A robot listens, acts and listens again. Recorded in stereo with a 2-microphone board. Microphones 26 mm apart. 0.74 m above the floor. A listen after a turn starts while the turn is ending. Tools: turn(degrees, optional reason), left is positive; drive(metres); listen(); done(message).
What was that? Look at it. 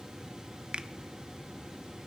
turn(degrees=-45, reason="The finger snap: about 45° right or 135° right.")
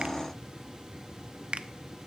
turn(degrees=-80, reason="So it is at 80° right.")
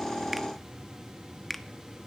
done("Facing the finger snap.")